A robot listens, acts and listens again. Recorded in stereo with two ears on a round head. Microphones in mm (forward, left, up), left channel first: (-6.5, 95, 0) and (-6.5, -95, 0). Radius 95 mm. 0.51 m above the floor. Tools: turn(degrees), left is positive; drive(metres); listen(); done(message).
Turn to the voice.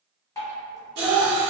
turn(degrees=-25)
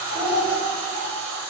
done("Facing the child speaking, 1 to 2 m away.")